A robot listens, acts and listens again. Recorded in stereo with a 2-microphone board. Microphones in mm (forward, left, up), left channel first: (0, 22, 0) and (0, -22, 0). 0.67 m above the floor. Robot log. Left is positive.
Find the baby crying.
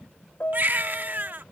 note: The baby crying: about 45° right or 135° right.
cmd yaw -45
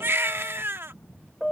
note: So it is at 90° right.
cmd yaw -90
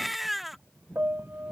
end: Facing the baby crying.